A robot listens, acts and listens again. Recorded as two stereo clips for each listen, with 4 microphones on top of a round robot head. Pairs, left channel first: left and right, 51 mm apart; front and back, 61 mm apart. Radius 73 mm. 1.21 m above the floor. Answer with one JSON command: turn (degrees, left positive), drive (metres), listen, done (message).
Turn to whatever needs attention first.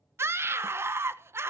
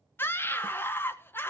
{"turn": -55}
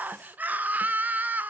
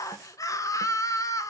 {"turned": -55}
{"turn": -35}
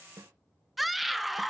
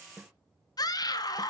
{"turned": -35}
{"done": "Found it: a scream, straight ahead."}